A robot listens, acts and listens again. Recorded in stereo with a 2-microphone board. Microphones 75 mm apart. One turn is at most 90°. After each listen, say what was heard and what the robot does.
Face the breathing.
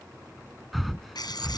Turn 30° left.
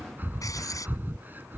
So it is at 30° right. Turn 30° right.
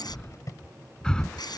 The breathing is now 10° left. Turn 10° left.
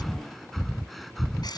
Found it: breathing, straight ahead.